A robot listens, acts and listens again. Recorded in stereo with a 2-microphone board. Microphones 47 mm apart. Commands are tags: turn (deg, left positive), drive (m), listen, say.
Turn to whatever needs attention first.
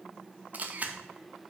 <listen/>
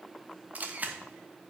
<listen/>
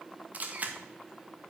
<say>I can't make out anything urgent to turn to.</say>